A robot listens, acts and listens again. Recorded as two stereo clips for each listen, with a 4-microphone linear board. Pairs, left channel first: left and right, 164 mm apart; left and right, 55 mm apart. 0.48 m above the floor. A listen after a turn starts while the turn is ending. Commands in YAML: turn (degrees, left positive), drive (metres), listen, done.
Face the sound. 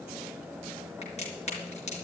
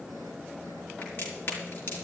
turn: 45
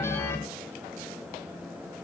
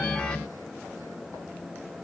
listen: true
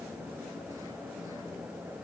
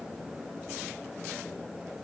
done: "I heard a crack, but can't make it out now. It was about straight ahead or 90° left."